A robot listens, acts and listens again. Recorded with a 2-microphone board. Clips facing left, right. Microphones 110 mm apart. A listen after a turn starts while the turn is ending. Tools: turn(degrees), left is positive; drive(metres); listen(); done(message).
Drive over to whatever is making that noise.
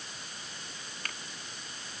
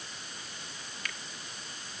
turn(degrees=45)
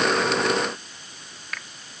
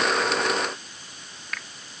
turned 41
drive(metres=1.0)
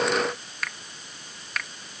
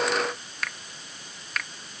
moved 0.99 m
drive(metres=1.0)
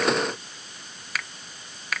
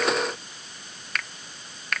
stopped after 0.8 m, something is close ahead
done("Arrived at the finger snap, straight ahead.")